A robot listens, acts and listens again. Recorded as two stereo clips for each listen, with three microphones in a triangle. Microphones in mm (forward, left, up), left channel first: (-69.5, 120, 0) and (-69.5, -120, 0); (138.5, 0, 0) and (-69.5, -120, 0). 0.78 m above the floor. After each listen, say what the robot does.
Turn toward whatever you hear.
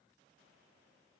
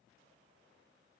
Keep listening.
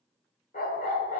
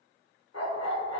Turn 35° left.
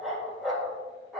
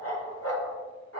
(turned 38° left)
Facing the dog barking, 1 to 2 m away.